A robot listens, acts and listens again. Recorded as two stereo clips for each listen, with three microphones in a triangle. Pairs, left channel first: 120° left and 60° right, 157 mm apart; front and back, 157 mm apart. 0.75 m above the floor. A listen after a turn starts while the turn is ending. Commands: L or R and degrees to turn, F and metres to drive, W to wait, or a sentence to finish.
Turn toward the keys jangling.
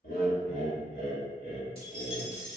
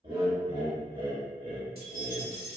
L175
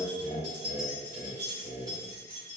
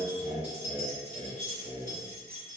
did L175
Found it: keys jangling, straight ahead, 2 to 4 m away.